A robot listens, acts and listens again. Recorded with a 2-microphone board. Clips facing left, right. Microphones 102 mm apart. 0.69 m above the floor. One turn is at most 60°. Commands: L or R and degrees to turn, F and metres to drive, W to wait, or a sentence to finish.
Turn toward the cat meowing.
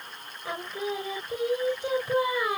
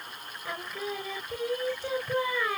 W
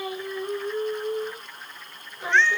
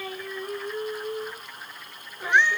R30
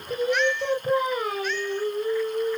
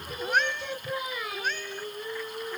R60
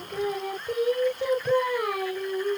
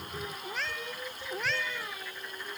R60
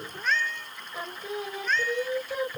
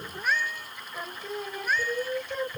R10
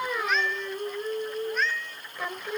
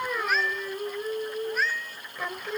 Found it: a cat meowing, straight ahead.